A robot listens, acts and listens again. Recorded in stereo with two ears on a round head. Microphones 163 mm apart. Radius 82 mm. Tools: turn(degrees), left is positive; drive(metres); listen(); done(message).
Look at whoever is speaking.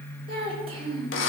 turn(degrees=-30)
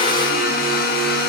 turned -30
listen()
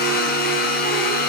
listen()
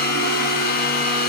done("I heard a child speaking, but can't make it out now. It was about straight ahead or 120° right.")